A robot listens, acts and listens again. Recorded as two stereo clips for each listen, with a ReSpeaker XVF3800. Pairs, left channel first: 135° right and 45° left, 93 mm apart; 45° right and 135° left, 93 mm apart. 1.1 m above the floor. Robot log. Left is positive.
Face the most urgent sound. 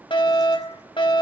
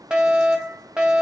note: The fire alarm: 145° right.
cmd yaw -145
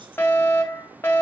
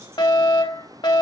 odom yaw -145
note: The fire alarm is now 75° right.
cmd yaw -75
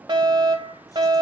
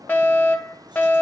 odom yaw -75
note: The fire alarm is now 25° left.
cmd yaw +25
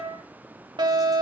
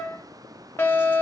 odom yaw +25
note: The fire alarm is now 20° left.
cmd yaw +20
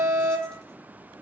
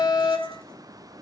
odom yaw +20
end: Found it: a fire alarm, straight ahead, 2 to 4 m away.